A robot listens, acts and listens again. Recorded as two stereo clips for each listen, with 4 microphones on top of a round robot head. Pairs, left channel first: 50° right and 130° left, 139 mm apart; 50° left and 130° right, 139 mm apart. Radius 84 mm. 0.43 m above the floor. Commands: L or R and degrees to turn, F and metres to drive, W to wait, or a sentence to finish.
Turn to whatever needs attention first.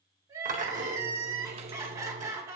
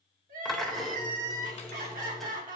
R160
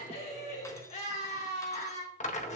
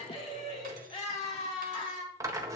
Facing the crying, 2 to 4 m away.